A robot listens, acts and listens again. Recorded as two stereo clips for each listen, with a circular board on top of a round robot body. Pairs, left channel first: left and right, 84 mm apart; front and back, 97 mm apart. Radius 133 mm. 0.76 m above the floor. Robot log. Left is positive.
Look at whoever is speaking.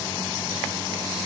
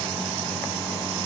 cmd idle
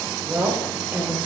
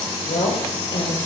note: The woman speaking: 20° right.
cmd yaw -20
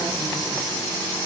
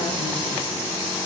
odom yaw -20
cmd idle
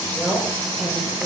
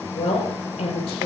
end: Facing the woman speaking.